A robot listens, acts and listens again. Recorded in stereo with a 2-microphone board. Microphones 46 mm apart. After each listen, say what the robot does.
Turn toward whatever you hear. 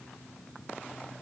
Keep listening.
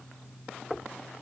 Turn 30° right.
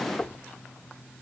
Turn 25° left.
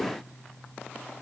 Keep listening.
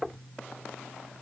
Turn 10° right.
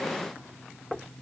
Found it: knocking, straight ahead.